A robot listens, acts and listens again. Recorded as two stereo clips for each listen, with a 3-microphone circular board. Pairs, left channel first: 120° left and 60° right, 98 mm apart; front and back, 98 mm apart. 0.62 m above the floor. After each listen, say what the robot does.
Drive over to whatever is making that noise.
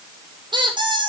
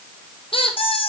Turn 25° right.
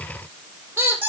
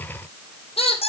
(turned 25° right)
Drive 1.0 m forward.
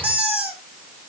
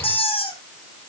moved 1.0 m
Turn 15° left.
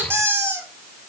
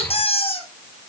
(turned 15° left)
Drive 1.0 m forward.
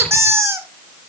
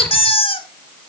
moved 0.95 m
Drive 1.0 m forward.
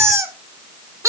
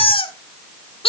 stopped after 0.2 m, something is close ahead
I am next to the squeak.